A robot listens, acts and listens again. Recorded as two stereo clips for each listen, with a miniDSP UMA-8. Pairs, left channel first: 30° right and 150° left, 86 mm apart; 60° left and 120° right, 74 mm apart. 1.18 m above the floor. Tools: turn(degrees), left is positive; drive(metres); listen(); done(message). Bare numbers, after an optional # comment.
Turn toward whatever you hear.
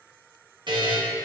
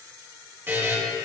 # The buzzer: 175° left.
turn(175)
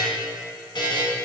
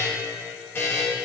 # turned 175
done("Found it: a buzzer, straight ahead.")